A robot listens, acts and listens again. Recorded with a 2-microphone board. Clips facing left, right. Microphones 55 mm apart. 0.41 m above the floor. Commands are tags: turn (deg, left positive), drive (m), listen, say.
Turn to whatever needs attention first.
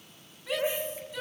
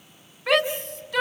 <turn deg="-70"/>
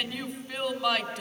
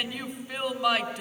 <say>Facing the shout.</say>